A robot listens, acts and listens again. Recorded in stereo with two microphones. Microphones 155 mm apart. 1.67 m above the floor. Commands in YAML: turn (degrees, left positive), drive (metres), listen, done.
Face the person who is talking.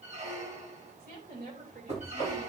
turn: -90
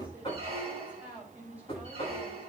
turn: -10
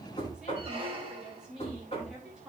done: "Facing the woman speaking, 2 to 4 m away."